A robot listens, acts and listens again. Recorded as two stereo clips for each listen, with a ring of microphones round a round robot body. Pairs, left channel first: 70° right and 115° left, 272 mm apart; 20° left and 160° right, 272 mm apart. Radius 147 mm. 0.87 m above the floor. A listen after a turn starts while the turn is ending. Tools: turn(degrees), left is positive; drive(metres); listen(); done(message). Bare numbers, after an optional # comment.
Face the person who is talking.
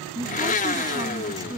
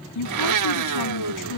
# The woman speaking: 35° left.
turn(35)
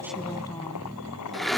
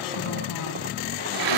listen()
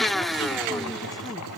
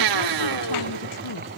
listen()
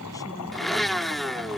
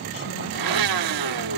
done("I heard a woman speaking from this way, but can't make it out now.")